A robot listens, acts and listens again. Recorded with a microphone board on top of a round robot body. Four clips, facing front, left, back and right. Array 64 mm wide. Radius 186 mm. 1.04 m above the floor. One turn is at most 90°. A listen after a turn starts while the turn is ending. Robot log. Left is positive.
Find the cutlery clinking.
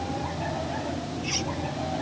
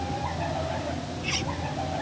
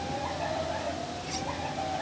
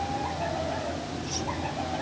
note: The cutlery clinking: 70° left.
cmd yaw +70
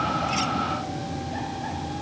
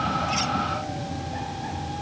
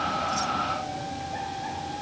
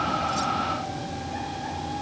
cmd idle
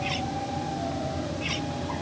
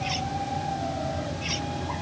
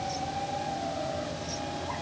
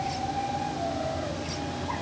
note: The cutlery clinking is now 20° left.
cmd yaw +20
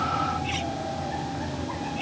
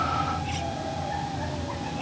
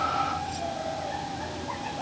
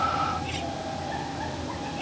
end: Facing the cutlery clinking.